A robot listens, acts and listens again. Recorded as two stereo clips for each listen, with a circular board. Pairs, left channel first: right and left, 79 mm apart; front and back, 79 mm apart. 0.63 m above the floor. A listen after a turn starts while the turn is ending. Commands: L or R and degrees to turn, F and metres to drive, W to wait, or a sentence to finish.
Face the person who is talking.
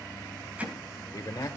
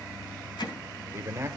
R130
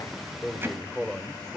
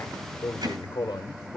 Found it: a man speaking, straight ahead.